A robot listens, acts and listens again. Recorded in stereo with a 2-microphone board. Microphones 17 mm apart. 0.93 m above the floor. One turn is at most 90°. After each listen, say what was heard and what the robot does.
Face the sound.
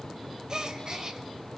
The gasp: about 45° right or 135° right. Turn 45° right.
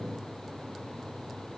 Keep listening.
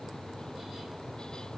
I heard a gasp, but can't make it out now. It was about straight ahead or 90° right.